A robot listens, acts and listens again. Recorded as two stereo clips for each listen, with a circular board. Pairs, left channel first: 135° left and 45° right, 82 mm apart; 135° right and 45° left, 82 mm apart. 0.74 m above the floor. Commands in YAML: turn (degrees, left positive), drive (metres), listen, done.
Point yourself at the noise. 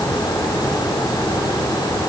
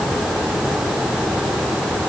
listen: true
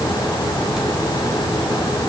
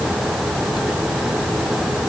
listen: true
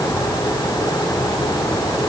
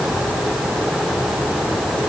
done: "I can't make out anything to turn to."